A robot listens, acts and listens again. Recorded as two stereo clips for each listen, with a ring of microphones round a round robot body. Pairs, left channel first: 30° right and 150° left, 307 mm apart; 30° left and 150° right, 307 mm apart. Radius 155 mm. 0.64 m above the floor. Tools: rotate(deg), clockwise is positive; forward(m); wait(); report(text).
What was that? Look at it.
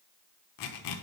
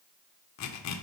rotate(10)
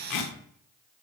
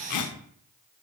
report("Facing the zipper.")